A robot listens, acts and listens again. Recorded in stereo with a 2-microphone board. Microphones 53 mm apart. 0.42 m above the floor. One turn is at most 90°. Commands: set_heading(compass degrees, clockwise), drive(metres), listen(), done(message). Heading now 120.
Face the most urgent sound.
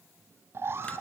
set_heading(165)
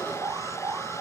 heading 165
set_heading(255)
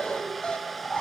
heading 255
set_heading(235)
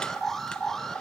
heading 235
done("Facing the alarm.")